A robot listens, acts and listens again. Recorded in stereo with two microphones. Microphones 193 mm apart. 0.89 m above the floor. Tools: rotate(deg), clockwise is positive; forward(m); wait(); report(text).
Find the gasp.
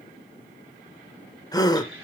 rotate(-20)
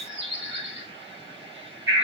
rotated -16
wait()
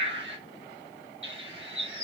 report("I heard a gasp, but can't make it out now. It was about straight ahead or 145° left.")